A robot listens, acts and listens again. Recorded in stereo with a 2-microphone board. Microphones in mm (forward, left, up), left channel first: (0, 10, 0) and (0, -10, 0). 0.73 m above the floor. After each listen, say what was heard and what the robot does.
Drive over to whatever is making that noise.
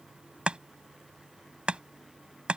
The chopping: about 75° right or 105° right. Turn 75° right.
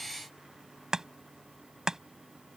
So it is at 35° right. Turn 35° right.
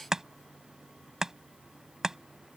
The chopping is now 30° right. Turn 30° right.
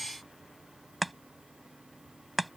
Drive 1.0 m forward.
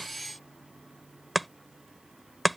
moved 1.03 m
Drive 1.0 m forward.
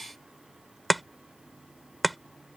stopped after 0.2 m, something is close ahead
I am next to the chopping.